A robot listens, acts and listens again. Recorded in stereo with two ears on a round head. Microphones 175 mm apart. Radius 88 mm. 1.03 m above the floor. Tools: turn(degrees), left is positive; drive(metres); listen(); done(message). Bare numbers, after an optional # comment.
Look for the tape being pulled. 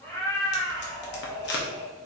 # The tape being pulled: about 60° left or 120° left.
turn(60)
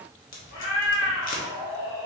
# So it is at 50° left.
turn(50)
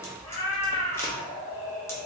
# The tape being pulled is now 15° left.
turn(15)
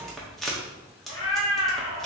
done("Facing the tape being pulled.")